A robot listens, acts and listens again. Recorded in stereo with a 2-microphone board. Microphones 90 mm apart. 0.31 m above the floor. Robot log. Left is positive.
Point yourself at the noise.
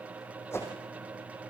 note: The whoosh: about 30° left or 150° left.
cmd yaw +30
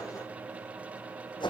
note: So it is at 125° left.
cmd yaw +125
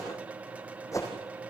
note: The whoosh is now 35° left.
cmd yaw +35
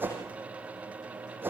note: The whoosh is now 20° right.
cmd yaw -20
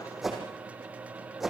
end: Found it: a whoosh, straight ahead, over 4 m away.